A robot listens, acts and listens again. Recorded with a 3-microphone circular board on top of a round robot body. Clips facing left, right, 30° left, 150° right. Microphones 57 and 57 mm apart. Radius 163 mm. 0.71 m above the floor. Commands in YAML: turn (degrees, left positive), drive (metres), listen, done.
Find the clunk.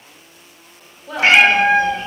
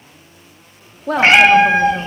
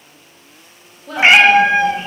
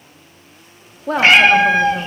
listen: true
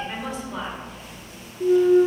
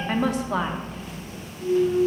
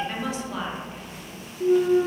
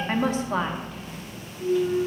turn: 70
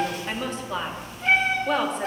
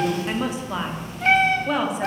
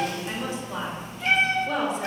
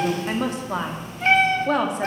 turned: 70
done: "I heard a clunk from this way, but can't make it out now."